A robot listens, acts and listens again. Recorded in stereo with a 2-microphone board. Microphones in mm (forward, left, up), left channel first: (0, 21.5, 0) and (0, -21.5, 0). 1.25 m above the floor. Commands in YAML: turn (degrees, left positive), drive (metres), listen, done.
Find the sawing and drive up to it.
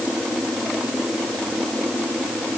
listen: true
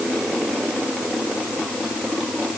listen: true
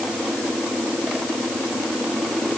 done: "I can't make out sawing."